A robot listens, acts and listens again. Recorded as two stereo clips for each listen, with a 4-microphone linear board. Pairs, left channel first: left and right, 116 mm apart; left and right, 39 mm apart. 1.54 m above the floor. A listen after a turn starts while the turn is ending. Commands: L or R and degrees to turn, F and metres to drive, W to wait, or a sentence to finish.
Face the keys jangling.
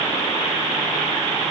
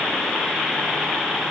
W
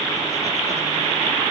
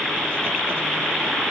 W
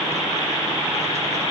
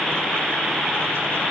I can't make out keys jangling.